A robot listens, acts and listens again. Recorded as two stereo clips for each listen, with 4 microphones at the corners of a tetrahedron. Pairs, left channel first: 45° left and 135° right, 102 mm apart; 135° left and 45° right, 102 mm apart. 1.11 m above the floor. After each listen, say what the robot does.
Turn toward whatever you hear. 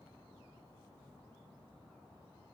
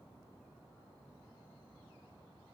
Keep listening.
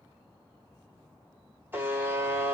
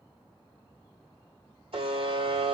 Turn 65° right.
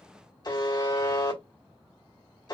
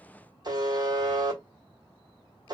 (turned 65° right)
Facing the buzzer.